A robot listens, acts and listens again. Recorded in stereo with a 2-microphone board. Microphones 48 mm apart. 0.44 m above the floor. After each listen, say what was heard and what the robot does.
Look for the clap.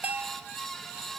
Keep listening.
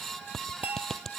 Turn 30° left.
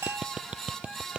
So it is at 20° right. Turn 20° right.
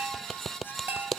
Facing the clap.